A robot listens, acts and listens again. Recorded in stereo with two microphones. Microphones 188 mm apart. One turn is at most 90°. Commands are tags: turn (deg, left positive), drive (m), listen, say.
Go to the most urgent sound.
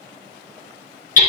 <listen/>
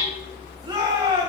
<turn deg="-25"/>
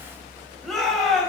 <drive m="1.0"/>
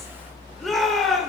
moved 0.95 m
<drive m="1.0"/>
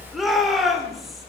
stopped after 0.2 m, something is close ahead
<say>Arrived at the shout, straight ahead.</say>